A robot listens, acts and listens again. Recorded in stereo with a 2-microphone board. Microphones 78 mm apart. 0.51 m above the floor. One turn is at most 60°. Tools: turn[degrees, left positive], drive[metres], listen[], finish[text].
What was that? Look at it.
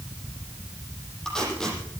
Action: turn[30]
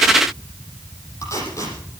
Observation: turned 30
Thought: So it is at 140° left.
Action: turn[60]
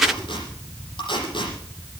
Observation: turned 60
Thought: The tape being pulled is now 85° left.
Action: turn[60]
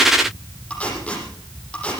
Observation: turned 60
Thought: The tape being pulled is now 15° left.
Action: turn[15]
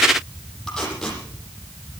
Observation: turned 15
Action: finish[Found it: tape being pulled, straight ahead.]